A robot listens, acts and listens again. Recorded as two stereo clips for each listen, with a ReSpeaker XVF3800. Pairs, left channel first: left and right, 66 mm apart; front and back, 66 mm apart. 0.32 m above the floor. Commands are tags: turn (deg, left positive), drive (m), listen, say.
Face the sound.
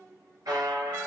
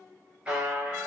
<turn deg="-105"/>
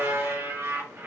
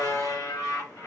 <turn deg="-35"/>
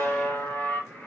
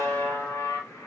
<turn deg="25"/>
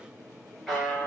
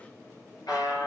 <say>Found it: a buzzer, straight ahead.</say>